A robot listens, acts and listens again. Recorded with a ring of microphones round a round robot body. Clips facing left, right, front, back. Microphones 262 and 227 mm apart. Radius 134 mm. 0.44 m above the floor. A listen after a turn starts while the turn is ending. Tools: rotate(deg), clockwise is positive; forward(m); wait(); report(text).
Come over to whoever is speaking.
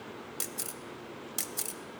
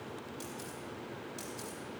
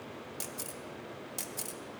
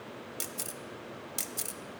wait()
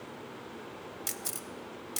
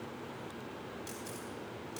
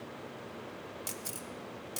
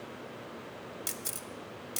wait()
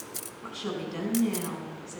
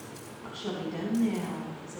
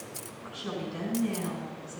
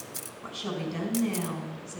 rotate(-165)
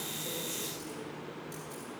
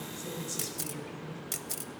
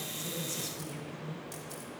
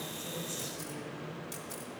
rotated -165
rotate(35)
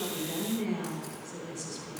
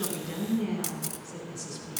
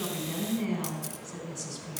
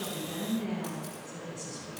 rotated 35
forward(1.0)
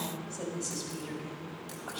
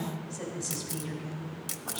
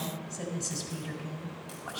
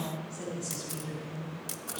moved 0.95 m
forward(1.0)
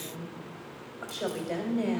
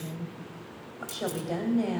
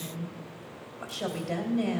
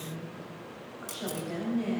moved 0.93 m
forward(1.0)
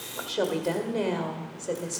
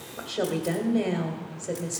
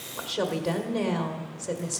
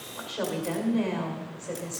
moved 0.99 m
rotate(-10)
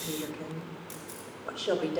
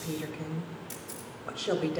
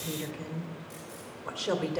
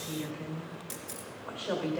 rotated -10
forward(1.0)
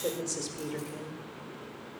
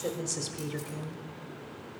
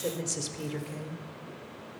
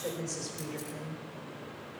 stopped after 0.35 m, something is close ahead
report("I am next to the woman speaking.")